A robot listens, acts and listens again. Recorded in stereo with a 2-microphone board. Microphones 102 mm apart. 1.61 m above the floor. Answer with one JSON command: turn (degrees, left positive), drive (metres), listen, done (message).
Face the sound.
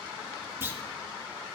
{"turn": -20}
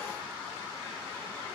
{"listen": true}
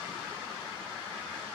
{"done": "I heard a clunk, but can't make it out now. It was about straight ahead or 140° right."}